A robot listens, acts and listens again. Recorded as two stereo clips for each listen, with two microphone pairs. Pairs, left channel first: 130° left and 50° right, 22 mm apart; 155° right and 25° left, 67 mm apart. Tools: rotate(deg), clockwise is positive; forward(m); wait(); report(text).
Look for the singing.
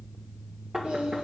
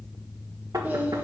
rotate(45)
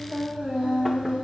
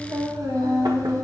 rotate(10)
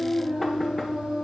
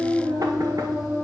report("Found it: singing, straight ahead, 2 to 4 m away.")